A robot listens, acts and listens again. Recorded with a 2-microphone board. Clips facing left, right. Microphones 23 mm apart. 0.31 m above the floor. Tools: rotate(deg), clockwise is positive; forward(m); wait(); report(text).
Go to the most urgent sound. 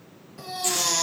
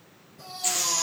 rotate(-90)
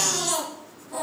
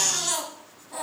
forward(1.0)
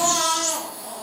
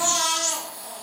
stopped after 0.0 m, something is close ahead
report("Blocked. The baby crying is further on, straight ahead.")